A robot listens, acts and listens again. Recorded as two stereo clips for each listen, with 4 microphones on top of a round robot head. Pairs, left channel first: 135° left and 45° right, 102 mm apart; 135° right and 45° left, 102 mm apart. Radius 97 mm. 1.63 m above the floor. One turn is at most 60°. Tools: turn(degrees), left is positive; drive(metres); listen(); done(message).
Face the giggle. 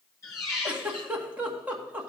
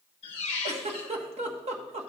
turn(degrees=30)
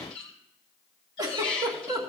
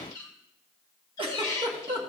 turn(degrees=10)
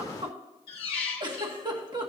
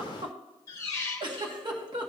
done("Found it: a giggle, straight ahead.")